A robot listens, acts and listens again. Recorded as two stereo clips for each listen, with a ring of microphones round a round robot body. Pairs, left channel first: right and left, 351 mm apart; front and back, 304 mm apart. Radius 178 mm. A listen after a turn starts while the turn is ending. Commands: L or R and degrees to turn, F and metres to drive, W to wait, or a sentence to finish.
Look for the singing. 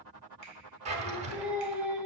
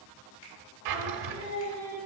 Facing the singing, under 1 m away.